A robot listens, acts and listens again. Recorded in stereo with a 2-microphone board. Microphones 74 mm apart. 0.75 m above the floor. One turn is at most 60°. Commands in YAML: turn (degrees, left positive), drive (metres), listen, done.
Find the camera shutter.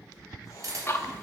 turn: -45
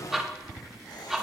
listen: true
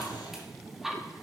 listen: true
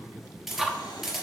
done: "Facing the camera shutter."